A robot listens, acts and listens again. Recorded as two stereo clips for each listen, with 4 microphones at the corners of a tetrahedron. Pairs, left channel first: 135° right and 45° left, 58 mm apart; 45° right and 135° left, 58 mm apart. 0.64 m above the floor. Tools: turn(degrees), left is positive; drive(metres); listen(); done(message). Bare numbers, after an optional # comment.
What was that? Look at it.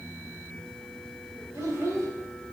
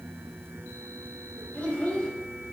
# The child speaking: 25° left.
turn(25)
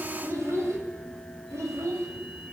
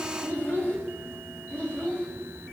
# The child speaking is now 25° left.
turn(25)
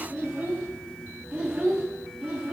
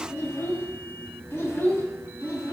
# The child speaking is now 10° right.
turn(-10)
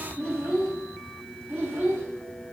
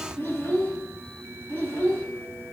done("Facing the child speaking, 2 to 4 m away.")